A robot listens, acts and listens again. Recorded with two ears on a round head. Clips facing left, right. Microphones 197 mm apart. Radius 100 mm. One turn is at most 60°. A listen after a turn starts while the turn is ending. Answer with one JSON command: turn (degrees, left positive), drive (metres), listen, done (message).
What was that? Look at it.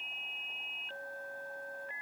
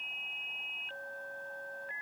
{"listen": true}
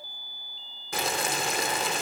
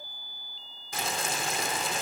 {"turn": 50}
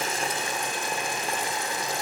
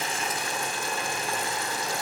{"turn": 20}
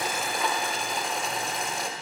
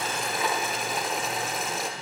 {"done": "Found it: boiling, straight ahead, under 1 m away."}